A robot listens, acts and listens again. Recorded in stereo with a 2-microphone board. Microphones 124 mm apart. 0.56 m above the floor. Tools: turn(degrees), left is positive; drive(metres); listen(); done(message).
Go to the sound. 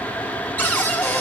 turn(degrees=30)
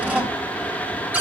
turn(degrees=-15)
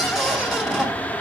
drive(metres=1.0)
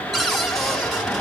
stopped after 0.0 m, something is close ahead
done("Something is in my way. I am facing the cupboard door but have not reached it.")